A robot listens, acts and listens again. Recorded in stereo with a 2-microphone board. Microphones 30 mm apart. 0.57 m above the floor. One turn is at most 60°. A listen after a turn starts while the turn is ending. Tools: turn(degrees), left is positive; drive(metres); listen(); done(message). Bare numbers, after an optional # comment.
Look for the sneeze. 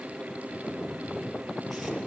listen()
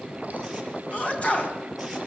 # The sneeze: about 45° left or 135° left.
turn(45)
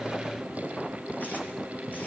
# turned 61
listen()
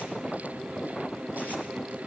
done("I heard a sneeze, but can't make it out now. It was about 15° right or 75° left.")